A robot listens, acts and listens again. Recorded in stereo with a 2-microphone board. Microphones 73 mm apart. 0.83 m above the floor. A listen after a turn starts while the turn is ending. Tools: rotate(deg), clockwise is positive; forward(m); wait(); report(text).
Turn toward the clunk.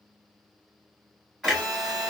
rotate(-30)
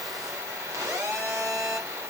wait()
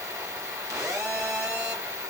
report("I heard a clunk, but can't make it out now. It was about 30° right or 150° left.")